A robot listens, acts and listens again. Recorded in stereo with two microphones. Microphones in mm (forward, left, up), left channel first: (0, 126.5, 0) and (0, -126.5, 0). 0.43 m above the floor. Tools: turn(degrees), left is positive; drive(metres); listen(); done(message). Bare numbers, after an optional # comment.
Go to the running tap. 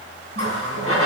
# The running tap: about 60° right or 120° right.
turn(-60)
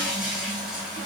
drive(1.0)
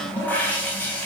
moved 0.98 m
drive(1.0)
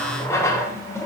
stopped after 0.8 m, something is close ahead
# The running tap is now 15° left.
turn(15)
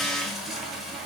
done("I am next to the running tap.")